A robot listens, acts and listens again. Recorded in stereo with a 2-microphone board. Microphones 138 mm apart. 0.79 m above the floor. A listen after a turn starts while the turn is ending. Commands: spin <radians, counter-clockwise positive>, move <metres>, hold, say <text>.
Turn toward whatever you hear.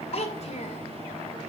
spin 0.87
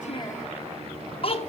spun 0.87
spin 0.79
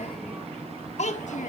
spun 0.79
spin 0.96
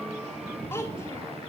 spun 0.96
spin 0.35
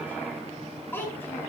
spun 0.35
spin 0.26
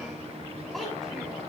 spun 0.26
hold
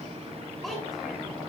say Facing the child speaking.